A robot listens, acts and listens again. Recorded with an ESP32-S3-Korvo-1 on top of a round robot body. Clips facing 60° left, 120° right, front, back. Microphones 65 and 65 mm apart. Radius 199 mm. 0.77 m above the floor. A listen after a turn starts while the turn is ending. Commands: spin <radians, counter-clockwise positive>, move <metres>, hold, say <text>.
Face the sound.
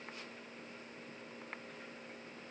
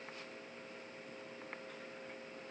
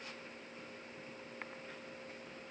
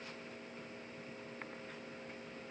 hold
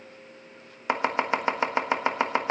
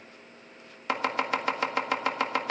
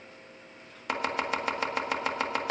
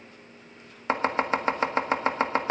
spin 2.18
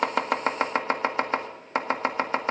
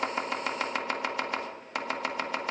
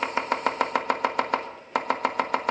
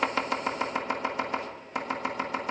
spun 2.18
say Facing the chopping.